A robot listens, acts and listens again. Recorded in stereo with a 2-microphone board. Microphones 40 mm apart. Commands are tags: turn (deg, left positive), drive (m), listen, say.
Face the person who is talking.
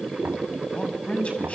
<turn deg="30"/>
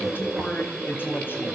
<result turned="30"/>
<turn deg="115"/>
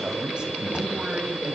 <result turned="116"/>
<turn deg="-30"/>
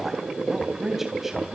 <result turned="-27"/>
<say>Facing the man speaking.</say>